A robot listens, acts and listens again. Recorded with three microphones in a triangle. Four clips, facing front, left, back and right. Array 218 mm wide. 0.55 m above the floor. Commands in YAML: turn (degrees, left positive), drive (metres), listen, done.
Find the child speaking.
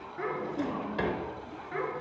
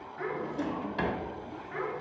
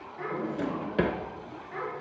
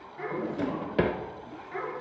done: "Found it: a child speaking, straight ahead, over 4 m away."